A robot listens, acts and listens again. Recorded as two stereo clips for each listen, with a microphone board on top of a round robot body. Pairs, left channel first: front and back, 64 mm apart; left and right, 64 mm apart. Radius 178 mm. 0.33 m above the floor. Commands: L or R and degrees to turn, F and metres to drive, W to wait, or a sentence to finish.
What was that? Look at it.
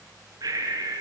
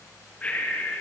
L160
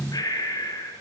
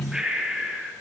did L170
R10
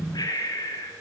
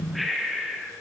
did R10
Facing the breathing, over 4 m away.